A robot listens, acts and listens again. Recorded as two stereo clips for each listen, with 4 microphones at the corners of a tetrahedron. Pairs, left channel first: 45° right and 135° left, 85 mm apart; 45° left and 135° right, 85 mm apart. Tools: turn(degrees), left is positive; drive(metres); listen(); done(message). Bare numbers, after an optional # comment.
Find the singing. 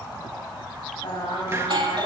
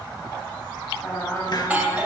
# The singing: 20° right.
turn(-20)
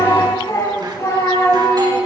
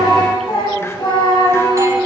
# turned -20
# The singing is now 15° left.
turn(15)
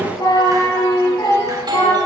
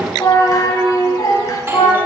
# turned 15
done("Found it: singing, straight ahead.")